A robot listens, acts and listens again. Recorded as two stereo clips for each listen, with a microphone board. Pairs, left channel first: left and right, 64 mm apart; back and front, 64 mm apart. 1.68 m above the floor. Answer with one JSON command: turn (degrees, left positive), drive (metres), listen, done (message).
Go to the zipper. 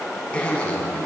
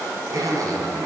{"turn": 15}
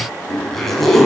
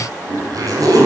{"drive": 1.0}
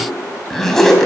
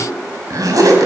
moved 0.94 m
{"drive": 1.0}
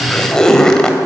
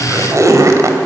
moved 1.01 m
{"turn": 10}
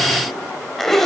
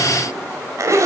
{"drive": 1.0}
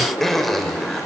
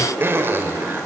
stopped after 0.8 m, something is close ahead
{"done": "Arrived at the zipper, straight ahead."}